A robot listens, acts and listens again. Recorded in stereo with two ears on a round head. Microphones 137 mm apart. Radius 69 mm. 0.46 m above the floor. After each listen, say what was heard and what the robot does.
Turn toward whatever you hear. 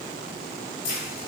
The keys jangling: about 60° left or 120° left. Turn 60° left.
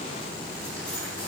So it is at 10° left. Turn 10° left.
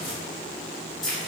Found it: keys jangling, straight ahead, 1 to 2 m away.